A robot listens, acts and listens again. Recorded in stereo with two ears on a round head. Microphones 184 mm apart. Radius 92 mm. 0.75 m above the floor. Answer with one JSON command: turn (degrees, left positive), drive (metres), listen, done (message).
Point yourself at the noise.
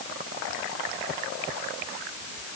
{"listen": true}
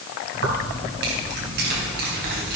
{"turn": -50}
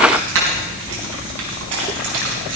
{"turn": -85}
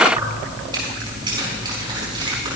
{"turn": -25}
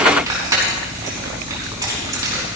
{"turn": -20}
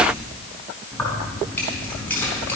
{"turn": 10}
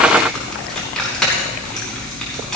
{"done": "Facing the keys jangling, over 4 m away."}